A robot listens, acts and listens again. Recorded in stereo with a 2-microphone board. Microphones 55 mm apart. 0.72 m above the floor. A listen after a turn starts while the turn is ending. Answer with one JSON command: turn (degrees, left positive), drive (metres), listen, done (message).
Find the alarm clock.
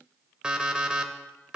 {"turn": -15}
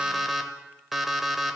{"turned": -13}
{"done": "Found it: an alarm clock, straight ahead, 1 to 2 m away."}